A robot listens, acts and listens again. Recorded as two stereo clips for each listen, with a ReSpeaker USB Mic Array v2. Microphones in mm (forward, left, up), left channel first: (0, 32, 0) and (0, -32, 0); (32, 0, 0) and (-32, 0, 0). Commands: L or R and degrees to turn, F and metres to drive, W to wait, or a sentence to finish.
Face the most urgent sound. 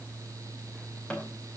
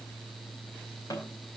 W
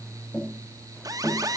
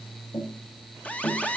R70
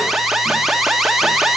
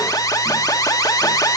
Facing the alarm.